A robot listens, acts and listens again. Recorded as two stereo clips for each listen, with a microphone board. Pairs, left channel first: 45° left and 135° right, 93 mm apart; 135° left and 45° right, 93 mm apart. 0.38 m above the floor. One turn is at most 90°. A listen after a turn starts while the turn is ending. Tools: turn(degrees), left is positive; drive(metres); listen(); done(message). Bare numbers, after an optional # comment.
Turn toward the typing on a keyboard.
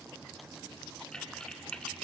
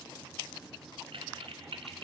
# The typing on a keyboard: 35° right.
turn(-35)
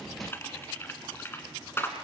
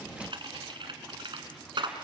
# The typing on a keyboard is now 20° right.
turn(-20)
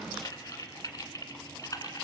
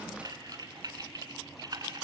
done("Facing the typing on a keyboard, 1 to 2 m away.")